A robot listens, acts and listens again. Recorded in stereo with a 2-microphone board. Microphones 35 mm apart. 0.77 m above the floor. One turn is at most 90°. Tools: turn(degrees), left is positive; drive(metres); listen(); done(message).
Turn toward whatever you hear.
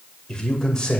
turn(degrees=20)
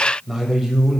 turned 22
done("Facing the man speaking.")